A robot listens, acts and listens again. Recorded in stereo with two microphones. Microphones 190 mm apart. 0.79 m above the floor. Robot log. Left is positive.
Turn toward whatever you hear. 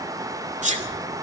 note: The sneeze: about 40° right or 140° right.
cmd yaw -40
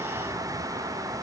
cmd idle
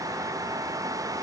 end: I heard a sneeze, but can't make it out now. It was about straight ahead or 100° right.